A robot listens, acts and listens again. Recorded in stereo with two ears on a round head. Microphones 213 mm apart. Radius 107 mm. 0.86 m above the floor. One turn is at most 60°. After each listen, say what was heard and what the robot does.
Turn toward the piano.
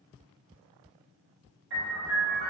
The piano: about 50° right or 130° right. Turn 50° right.
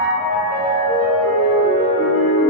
Found it: a piano, straight ahead.